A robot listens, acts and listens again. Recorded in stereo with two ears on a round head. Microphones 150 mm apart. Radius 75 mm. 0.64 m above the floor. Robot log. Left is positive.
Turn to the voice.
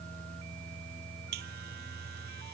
cmd idle
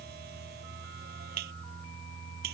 cmd idle
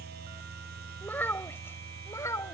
note: The child speaking: about 20° left or 160° left.
cmd yaw +20
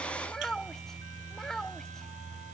cmd yaw +30
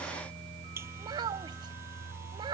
note: So it is at 30° right.
cmd yaw -30
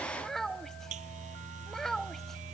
end: Found it: a child speaking, straight ahead.